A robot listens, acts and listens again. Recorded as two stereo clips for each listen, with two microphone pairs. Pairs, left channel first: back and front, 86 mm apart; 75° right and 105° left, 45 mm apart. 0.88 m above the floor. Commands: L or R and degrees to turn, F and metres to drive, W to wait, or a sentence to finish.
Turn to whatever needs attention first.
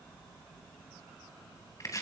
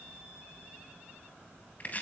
W
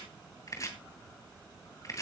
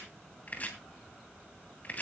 W
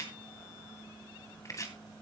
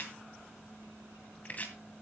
I can't make out anything urgent to turn to.